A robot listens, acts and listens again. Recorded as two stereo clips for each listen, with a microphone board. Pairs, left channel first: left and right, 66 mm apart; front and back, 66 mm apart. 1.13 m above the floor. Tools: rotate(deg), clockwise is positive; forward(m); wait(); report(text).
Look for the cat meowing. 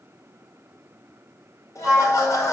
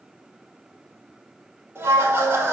wait()
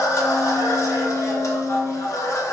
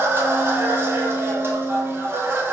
wait()
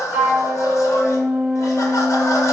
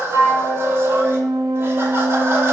report("I can't make out a cat meowing, only laughter and a flute.")